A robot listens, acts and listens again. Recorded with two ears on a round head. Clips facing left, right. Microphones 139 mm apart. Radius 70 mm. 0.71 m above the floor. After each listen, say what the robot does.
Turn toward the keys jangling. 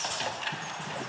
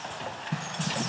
Keep listening.
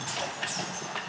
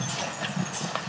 Keep listening.
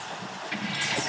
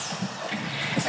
Turn 20° right.
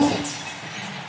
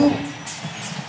Facing the keys jangling, over 4 m away.